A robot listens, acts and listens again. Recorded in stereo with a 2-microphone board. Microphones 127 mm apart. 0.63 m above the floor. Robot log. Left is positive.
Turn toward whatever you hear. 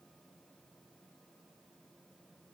cmd idle
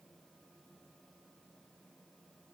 cmd idle
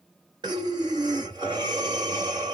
note: The breathing: about 35° right or 145° right.
cmd yaw -35
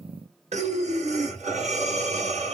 note: So it is at 115° right.
cmd yaw -115
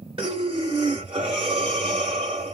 note: The breathing is now 45° right.
cmd yaw -45
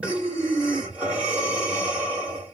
note: The breathing is now 10° right.
cmd yaw -10
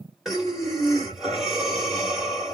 end: Facing the breathing.